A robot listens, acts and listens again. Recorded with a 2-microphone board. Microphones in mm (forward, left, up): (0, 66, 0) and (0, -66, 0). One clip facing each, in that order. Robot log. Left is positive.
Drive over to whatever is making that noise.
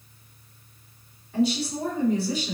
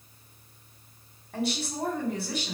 note: The woman speaking: about 60° right or 120° right.
cmd yaw -60
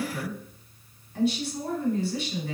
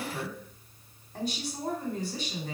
note: So it is at 45° right.
cmd yaw -45
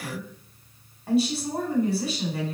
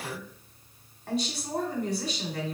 cmd fwd 1.0
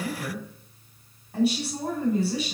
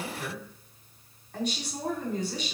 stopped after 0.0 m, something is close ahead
note: The woman speaking is now 10° left.
cmd yaw +10
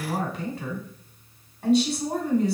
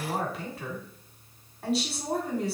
end: Blocked. The woman speaking is further on, straight ahead.